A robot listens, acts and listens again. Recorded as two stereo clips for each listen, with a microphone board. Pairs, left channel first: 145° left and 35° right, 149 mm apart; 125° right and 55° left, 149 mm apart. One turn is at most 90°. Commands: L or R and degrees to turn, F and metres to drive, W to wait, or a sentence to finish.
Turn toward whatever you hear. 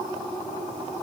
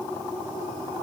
W
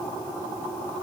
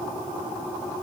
W
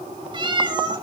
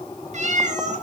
L25
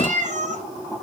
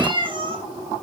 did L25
Found it: a cat meowing, straight ahead, 2 to 4 m away.